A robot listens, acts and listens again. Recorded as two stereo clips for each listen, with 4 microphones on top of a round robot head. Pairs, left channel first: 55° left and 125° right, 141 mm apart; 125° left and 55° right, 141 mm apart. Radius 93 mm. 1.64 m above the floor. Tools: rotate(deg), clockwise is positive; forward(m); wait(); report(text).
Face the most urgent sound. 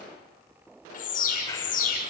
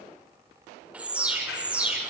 rotate(-25)
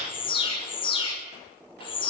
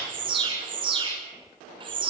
report("Facing the alarm.")